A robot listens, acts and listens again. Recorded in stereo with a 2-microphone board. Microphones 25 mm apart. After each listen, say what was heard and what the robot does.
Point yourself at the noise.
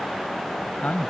Turn 90° left.
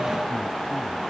Keep listening.
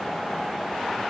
Keep listening.
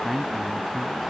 The man speaking is now 10° right. Turn 10° right.
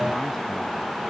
Keep listening.
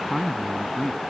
Facing the man speaking.